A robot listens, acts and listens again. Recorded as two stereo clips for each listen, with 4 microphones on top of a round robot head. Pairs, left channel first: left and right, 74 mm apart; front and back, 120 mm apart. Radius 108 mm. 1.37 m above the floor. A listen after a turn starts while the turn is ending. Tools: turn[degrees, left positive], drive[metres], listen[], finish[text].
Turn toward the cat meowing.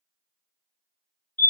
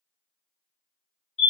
Action: listen[]
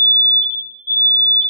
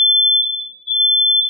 Action: listen[]
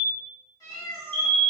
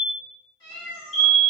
Thought: The cat meowing: 50° left.
Action: turn[50]
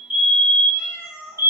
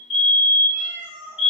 Thought: The cat meowing is now 10° right.
Action: turn[-10]
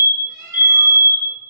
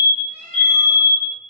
Action: finish[Found it: a cat meowing, straight ahead.]